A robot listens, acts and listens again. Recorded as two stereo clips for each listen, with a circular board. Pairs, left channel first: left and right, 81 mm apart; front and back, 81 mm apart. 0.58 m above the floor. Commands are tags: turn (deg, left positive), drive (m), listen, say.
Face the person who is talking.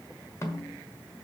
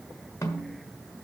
<listen/>
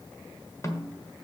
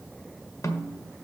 <listen/>
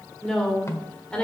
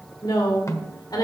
<turn deg="15"/>
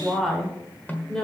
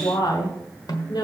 <turn deg="10"/>
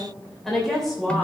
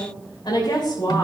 <say>Facing the woman speaking.</say>